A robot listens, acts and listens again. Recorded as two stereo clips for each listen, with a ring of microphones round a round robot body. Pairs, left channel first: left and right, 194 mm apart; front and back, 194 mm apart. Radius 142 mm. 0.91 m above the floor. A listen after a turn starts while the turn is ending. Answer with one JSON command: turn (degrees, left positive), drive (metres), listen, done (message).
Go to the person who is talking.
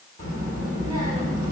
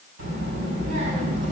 {"turn": 165}
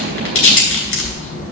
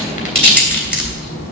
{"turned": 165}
{"turn": 40}
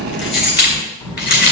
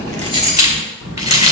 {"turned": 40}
{"turn": 15}
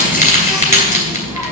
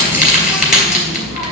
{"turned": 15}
{"drive": 1.0}
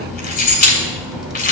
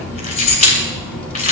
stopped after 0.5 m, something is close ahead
{"done": "Something is in my way. I am facing the child speaking but have not reached it."}